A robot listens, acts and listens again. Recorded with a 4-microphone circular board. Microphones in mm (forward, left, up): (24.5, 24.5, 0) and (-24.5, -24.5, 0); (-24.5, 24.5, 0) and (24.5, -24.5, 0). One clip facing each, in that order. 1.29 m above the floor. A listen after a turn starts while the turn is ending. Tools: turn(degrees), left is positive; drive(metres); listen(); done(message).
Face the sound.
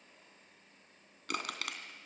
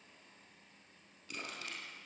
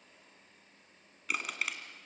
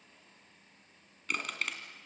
turn(degrees=50)
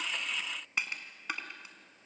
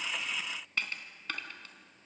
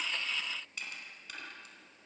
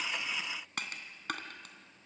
turn(degrees=-30)
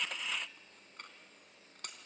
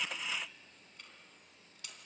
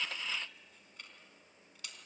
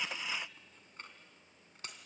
done("Found it: crushing, straight ahead.")